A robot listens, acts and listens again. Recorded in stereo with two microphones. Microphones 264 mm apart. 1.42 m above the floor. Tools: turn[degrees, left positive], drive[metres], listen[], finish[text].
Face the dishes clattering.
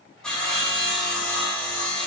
Action: listen[]
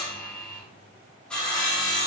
Action: listen[]
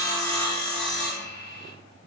Action: finish[I can't make out dishes clattering to turn to.]